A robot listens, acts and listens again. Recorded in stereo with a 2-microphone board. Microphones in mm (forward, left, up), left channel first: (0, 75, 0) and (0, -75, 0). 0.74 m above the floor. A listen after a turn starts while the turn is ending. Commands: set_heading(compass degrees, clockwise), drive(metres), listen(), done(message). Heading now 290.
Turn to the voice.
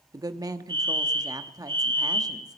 set_heading(315)
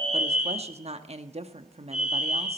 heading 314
set_heading(79)
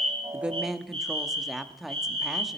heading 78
done("Facing the woman speaking, under 1 m away.")